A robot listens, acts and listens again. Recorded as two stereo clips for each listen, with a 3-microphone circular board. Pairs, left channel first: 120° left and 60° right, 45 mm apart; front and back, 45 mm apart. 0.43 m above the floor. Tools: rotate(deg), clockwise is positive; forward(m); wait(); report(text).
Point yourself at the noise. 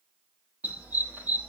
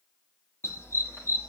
report("Facing the dog barking, over 4 m away.")